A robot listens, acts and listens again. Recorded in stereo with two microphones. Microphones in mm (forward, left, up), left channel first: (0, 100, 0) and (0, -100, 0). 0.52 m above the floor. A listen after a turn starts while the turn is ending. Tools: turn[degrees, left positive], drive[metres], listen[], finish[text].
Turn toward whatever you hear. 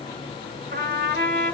Thought: The trumpet: about 55° right or 125° right.
Action: turn[-55]
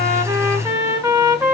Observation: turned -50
Thought: So it is at 15° right.
Action: turn[-15]
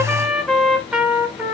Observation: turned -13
Action: finish[Found it: a trumpet, straight ahead.]